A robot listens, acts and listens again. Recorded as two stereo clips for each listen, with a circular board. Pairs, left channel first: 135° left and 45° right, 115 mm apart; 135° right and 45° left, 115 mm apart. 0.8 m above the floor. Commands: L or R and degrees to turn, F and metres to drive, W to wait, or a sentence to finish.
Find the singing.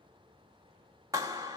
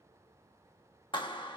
W
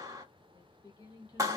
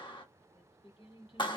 R175
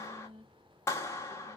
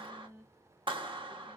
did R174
R25
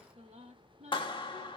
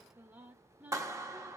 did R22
R30
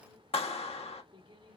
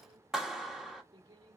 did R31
Found it: singing, straight ahead, 1 to 2 m away.